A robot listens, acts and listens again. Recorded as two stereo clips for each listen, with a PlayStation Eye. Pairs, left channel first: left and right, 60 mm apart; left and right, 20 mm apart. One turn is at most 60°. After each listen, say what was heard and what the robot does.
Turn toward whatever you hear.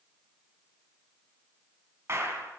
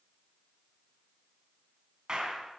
The clap: about 40° right or 140° right. Turn 40° right.
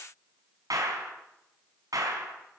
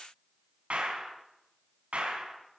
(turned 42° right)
So it is at 95° right. Turn 60° right.
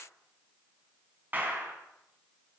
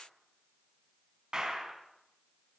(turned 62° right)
The clap is now 30° right. Turn 30° right.
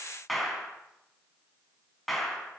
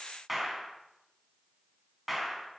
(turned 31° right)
Found it: a clap, straight ahead, 2 to 4 m away.